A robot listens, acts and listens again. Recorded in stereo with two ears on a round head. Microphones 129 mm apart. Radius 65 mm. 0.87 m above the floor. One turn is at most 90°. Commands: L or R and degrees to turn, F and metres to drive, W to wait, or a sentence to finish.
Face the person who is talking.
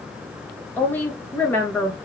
L30
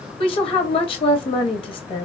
L90
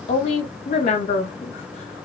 L50
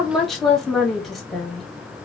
Facing the woman speaking.